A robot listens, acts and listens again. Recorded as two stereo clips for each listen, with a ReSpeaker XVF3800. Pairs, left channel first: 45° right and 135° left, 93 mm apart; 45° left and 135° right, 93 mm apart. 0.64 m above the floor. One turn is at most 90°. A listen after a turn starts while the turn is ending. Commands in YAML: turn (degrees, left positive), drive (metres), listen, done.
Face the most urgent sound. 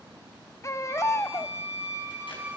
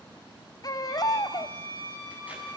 done: "Found it: a baby crying, straight ahead, under 1 m away."